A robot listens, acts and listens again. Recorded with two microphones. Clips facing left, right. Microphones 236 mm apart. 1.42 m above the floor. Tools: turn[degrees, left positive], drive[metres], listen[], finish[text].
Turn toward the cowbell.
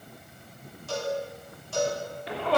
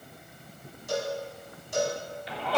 Action: turn[-30]
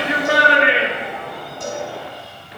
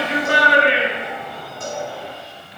Action: listen[]
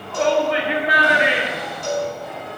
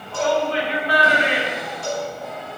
Thought: So it is at 15° left.
Action: turn[15]
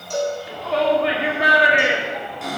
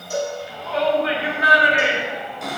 Action: finish[Found it: a cowbell, straight ahead, over 4 m away.]